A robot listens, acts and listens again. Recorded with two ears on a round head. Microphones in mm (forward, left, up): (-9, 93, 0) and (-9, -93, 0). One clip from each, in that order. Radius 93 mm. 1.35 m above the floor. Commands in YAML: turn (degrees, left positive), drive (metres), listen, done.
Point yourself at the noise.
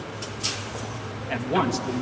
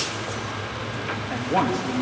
turn: 90
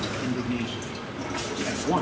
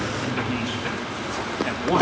turn: -40
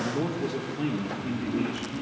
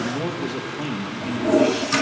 turn: -35
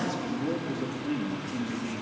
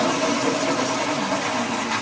listen: true
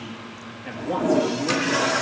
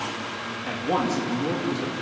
turn: -15
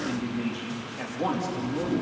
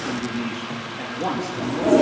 done: "Facing the man speaking, 2 to 4 m away."